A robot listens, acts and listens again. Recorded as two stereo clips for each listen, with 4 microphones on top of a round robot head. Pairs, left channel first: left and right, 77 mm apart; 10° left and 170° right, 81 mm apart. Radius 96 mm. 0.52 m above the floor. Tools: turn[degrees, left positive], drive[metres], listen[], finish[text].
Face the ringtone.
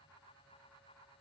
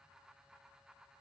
Action: listen[]
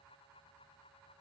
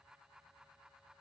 Action: listen[]
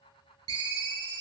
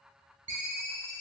Thought: The ringtone: 110° right.
Action: turn[-110]
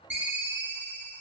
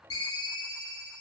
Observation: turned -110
Thought: The ringtone is now 25° right.
Action: turn[-25]
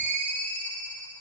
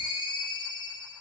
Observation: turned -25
Thought: The ringtone is now 20° left.
Action: turn[20]
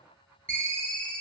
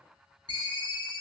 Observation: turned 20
Thought: The ringtone is now 10° left.
Action: turn[10]
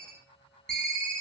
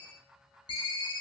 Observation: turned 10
Action: finish[Found it: a ringtone, straight ahead.]